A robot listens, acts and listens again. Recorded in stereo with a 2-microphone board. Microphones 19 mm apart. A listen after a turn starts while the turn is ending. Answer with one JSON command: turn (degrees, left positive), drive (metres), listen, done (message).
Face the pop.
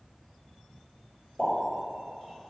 {"turn": 35}
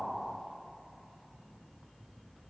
{"listen": true}
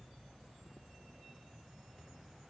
{"done": "I heard a pop, but can't make it out now. It was about straight ahead or 110° left."}